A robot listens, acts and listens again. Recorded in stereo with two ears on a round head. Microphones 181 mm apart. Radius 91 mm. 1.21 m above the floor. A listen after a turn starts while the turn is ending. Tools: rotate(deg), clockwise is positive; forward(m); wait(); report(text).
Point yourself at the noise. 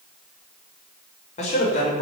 rotate(-35)
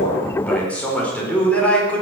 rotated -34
report("Found it: a man speaking, straight ahead, over 4 m away.")